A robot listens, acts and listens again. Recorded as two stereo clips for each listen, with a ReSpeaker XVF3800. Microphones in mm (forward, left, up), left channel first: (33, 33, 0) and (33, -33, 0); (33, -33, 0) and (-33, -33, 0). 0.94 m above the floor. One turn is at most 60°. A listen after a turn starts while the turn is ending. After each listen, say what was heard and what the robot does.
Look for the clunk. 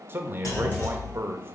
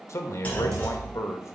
The clunk: 65° left. Turn 60° left.
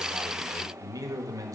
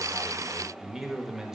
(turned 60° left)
Facing where the clunk came from. I can't hear it now.